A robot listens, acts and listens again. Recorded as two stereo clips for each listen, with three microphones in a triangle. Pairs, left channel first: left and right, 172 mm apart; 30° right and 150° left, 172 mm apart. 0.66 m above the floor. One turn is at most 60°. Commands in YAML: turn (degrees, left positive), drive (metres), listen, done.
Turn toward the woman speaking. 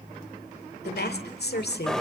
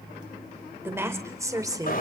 turn: 60
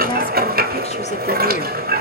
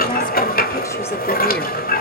turn: 25
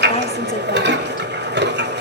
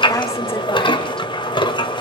listen: true
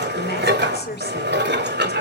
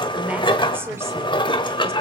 turn: 60
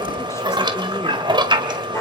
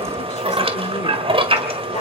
turn: 15
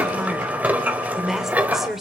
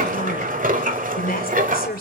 done: "Facing the woman speaking."